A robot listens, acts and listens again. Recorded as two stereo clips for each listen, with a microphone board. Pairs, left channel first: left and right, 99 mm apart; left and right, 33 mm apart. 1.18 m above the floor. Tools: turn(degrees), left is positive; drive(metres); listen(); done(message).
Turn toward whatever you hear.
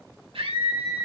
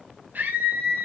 turn(degrees=-70)
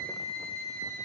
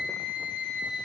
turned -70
turn(degrees=-40)
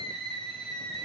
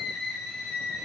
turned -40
done("Found it: a scream, straight ahead.")